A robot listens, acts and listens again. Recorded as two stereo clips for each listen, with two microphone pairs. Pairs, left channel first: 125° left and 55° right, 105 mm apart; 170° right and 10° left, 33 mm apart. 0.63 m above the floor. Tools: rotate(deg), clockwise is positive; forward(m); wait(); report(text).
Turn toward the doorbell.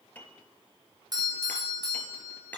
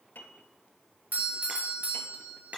rotate(10)
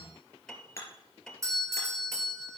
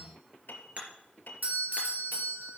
report("Facing the doorbell.")